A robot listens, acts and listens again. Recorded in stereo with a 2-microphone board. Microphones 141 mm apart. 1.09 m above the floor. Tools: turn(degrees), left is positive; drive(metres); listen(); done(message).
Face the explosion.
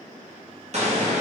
turn(degrees=-50)
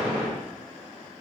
turn(degrees=-10)
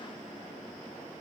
done("Facing where the explosion came from. I can't hear it now.")